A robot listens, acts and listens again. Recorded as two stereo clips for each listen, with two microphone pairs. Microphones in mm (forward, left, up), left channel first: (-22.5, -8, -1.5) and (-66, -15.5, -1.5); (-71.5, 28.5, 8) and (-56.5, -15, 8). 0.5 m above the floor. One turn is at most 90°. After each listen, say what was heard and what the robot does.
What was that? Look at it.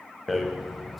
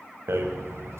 The rattle: 80° right. Turn 80° right.
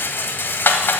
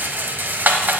The rattle is now 25° right. Turn 25° right.
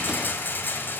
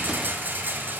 The rattle is now 25° right. Turn 25° right.
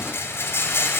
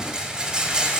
Facing the rattle.